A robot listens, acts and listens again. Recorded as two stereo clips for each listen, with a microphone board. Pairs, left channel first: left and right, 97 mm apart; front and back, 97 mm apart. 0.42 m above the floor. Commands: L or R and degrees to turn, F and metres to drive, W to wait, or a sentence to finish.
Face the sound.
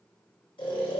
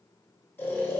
L65
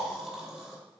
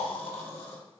Facing the snoring, 1 to 2 m away.